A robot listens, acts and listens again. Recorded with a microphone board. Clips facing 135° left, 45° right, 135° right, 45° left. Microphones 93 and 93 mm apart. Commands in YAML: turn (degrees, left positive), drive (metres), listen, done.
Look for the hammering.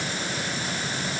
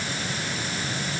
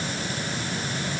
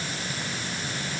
listen: true
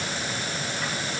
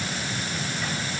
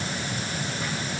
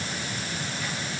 listen: true
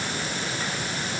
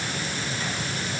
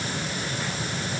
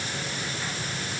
done: "I can't make out hammering."